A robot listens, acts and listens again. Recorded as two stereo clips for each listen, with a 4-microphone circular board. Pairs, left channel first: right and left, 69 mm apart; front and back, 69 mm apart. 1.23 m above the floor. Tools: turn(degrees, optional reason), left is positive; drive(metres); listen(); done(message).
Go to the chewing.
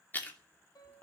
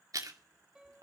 turn(degrees=-150, reason="The chewing: 150° right.")
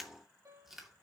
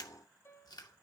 drive(metres=1.0)
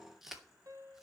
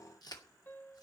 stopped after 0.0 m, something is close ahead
done("Blocked. The chewing is further on, straight ahead.")